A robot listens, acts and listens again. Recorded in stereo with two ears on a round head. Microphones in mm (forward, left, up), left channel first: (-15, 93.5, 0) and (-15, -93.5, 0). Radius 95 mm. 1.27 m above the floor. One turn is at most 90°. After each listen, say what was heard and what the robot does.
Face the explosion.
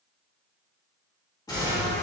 The explosion: about 20° left or 160° left. Turn 20° left.
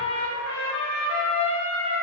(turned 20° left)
Keep listening.
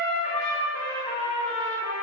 I heard an explosion, but can't make it out now. It was about straight ahead or 140° left.